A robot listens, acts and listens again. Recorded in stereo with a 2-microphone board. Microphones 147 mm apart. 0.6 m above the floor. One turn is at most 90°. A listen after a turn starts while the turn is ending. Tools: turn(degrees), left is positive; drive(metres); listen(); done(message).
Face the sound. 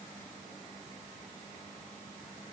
listen()
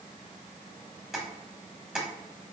turn(degrees=-30)
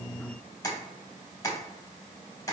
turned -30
turn(degrees=25)
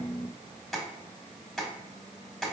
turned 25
done("Found it: tapping, straight ahead.")